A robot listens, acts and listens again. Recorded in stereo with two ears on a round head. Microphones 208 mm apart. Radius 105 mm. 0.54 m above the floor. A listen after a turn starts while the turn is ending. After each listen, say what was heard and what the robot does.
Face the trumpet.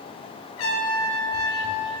The trumpet: about 70° left or 110° left. Turn 70° left.
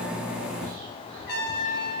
So it is at 45° left. Turn 45° left.
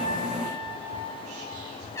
The trumpet is now 10° left. Turn 10° left.
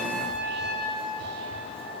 Facing the trumpet.